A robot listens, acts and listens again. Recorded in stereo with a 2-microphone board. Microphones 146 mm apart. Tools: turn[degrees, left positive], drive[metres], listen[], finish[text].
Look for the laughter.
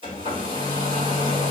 Action: listen[]
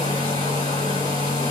Action: listen[]
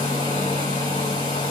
Action: finish[I can't make out laughter, only a hair dryer.]